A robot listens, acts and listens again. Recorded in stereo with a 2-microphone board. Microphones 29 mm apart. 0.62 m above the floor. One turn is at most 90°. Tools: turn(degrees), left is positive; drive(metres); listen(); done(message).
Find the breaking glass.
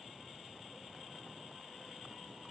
listen()
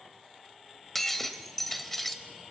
turn(degrees=30)
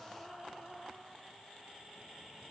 listen()
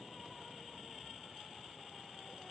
done("I heard breaking glass, but can't make it out now. It was about 20° right or 140° left.")